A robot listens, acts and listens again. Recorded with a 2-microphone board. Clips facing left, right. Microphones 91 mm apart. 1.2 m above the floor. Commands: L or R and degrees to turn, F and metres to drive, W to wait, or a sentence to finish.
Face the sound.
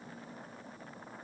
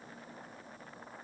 W
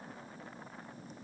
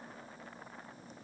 W
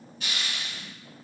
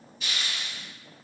L55
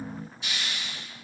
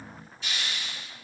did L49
L15
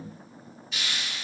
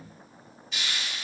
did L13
Facing the hiss, 1 to 2 m away.